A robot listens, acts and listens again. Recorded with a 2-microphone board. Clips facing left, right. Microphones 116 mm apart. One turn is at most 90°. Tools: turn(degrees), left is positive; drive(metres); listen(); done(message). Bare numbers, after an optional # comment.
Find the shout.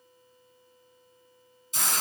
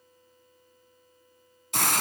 listen()
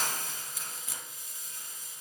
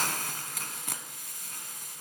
listen()
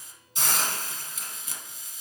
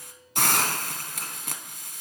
done("I can't make out a shout, only a hiss.")